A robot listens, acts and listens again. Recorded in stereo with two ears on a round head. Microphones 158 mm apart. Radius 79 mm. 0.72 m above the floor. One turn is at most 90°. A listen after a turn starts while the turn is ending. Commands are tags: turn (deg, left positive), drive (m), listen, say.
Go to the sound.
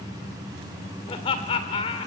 <turn deg="35"/>
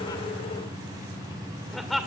<drive m="1.0"/>
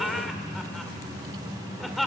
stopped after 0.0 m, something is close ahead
<say>Blocked. The laughter is further on, straight ahead.</say>